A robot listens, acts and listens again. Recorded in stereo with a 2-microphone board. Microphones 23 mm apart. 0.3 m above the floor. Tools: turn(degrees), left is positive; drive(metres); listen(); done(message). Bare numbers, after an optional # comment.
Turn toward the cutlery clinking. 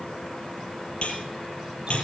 # The cutlery clinking: about 50° left or 130° left.
turn(50)
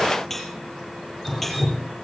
done("Facing the cutlery clinking.")